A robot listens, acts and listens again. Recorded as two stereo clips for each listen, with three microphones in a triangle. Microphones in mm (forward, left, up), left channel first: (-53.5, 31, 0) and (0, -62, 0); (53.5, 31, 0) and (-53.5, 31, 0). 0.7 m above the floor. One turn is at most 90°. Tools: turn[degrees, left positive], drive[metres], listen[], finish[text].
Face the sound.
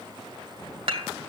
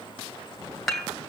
Thought: The dishes clattering: 85° right.
Action: turn[-85]
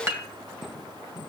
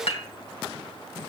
Action: finish[Facing the dishes clattering.]